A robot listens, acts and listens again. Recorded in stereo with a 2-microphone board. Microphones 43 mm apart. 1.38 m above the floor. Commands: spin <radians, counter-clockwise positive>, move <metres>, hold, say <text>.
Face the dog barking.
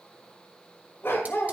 spin 1.22
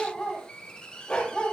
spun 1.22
spin 0.44
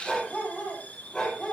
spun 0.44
spin 0.26
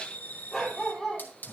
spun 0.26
say Found it: a dog barking, straight ahead.